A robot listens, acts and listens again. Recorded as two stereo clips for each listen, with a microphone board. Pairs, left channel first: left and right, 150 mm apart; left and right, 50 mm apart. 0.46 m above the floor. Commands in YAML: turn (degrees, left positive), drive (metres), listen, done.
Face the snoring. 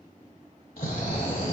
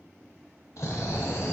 turn: 90
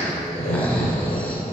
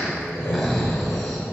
turn: 10
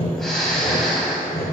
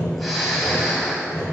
done: "Found it: snoring, straight ahead."